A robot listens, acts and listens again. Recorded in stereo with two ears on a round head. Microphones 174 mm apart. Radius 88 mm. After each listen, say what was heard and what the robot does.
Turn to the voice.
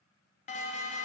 Keep listening.
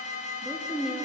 Turn 30° right.
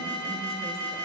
Keep listening.
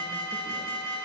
Keep listening.
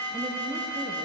I heard a woman speaking, but can't make it out now. It was about 25° left or 145° right.